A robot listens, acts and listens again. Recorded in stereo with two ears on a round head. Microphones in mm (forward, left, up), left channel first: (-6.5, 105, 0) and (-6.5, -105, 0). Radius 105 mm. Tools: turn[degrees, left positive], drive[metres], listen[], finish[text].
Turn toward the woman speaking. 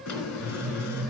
Action: listen[]
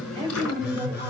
Thought: The woman speaking: about 25° right or 155° right.
Action: turn[-25]
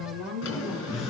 Thought: So it is at 135° right.
Action: turn[-135]
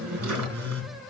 Action: listen[]
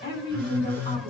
Thought: The woman speaking is now 25° left.
Action: turn[25]
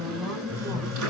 Action: finish[Facing the woman speaking.]